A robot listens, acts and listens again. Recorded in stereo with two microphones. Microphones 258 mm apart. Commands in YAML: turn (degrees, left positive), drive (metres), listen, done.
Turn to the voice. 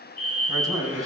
turn: -30
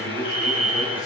turn: 15
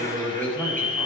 done: "Found it: a man speaking, straight ahead."